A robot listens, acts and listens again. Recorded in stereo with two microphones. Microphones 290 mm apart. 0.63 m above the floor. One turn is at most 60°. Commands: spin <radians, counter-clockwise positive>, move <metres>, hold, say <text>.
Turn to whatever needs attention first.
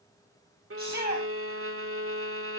spin 1.05
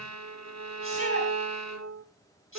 hold
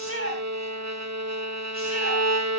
spin 0.79
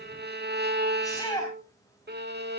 spin 0.17
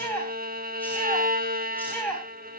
say Found it: a shout, straight ahead, over 4 m away.